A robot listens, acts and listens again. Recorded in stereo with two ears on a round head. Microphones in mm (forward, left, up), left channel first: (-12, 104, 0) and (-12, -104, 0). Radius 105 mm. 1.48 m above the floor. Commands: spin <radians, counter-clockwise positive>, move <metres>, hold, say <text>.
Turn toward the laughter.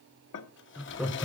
spin 0.52
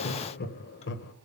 spin 2.27
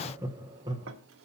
spin -0.35
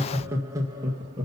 spin -0.35
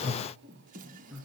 say Facing the laughter.